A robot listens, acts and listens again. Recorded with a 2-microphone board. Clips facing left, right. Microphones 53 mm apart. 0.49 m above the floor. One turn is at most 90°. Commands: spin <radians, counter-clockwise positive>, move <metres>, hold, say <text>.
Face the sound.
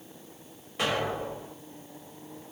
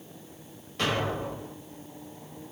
spin 0.52
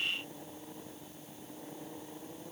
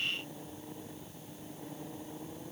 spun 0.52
hold
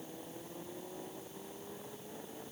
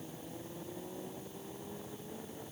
say I heard an explosion, but can't make it out now. It was about 20° right or 140° left.